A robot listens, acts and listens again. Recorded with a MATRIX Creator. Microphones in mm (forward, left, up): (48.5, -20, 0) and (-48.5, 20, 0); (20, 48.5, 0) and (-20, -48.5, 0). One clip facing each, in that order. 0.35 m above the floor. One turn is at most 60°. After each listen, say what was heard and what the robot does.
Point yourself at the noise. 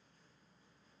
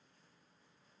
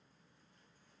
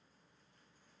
Keep listening.
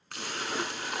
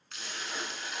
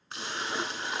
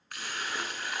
Found it: a splash, straight ahead.